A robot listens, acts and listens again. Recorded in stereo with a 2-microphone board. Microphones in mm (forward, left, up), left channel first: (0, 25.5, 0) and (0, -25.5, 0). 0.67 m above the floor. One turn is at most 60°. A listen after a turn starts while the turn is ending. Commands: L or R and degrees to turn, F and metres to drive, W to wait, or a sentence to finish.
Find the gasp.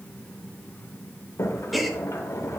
L30
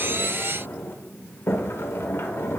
W
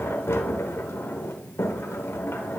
I heard a gasp, but can't make it out now. It was about 30° right or 150° left.